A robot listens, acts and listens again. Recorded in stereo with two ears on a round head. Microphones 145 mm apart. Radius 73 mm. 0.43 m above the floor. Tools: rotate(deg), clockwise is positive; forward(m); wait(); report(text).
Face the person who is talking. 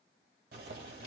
wait()
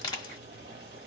wait()
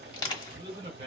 rotate(40)
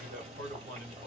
rotate(95)
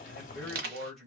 report("Found it: a man speaking, straight ahead, 1 to 2 m away.")